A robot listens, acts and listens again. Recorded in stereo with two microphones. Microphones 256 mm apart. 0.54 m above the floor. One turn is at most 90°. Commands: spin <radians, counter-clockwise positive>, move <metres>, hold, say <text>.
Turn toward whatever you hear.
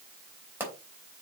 spin -0.52
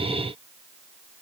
hold
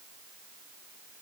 say I heard a pop, but can't make it out now. It was about 20° left or 140° right.